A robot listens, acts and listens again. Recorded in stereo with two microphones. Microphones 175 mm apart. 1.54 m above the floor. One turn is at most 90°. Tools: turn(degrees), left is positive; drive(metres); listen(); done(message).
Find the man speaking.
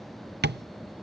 listen()
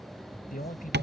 turn(degrees=55)
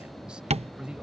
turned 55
done("Facing the man speaking.")